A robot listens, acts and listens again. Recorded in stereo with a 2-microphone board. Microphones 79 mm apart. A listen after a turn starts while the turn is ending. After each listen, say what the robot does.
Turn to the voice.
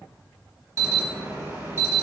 Keep listening.
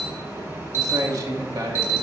Turn 50° right.
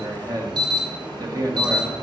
Turn 65° right.
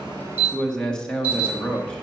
Turn 10° left.
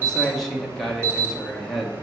Found it: a man speaking, straight ahead.